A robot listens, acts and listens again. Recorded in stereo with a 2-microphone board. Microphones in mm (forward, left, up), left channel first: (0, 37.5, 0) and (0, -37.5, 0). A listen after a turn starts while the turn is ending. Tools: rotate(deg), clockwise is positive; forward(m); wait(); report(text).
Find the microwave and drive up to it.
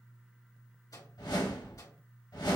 rotate(-60)
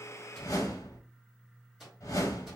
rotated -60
forward(1.0)
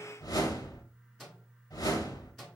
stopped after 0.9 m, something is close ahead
report("I am next to the microwave.")